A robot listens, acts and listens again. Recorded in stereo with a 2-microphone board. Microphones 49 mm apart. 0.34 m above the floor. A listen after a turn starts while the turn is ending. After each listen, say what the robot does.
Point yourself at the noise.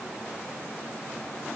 Keep listening.
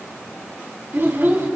Turn 55° right.
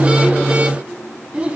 Turn 30° right.
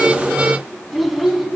Found it: a child speaking, straight ahead, 2 to 4 m away.